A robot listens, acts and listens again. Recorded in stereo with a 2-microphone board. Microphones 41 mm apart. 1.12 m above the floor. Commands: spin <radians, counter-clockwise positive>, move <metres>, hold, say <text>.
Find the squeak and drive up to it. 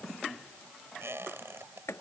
spin -1.22
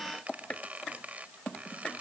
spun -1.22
spin -0.70
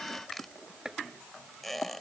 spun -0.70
move 1.0
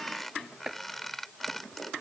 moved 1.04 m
move 1.0
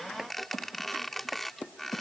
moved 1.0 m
move 1.0
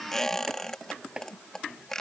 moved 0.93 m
spin 0.17
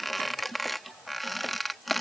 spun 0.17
move 1.0
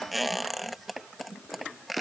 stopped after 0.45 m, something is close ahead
say Arrived at the squeak, straight ahead.